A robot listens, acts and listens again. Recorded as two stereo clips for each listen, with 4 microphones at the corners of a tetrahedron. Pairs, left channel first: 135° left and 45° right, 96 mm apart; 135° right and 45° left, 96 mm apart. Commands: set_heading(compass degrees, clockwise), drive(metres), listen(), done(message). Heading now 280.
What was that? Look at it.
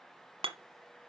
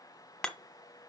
set_heading(335)
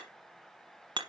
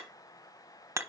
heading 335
set_heading(350)
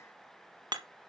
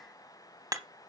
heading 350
done("Facing the hammering, 1 to 2 m away.")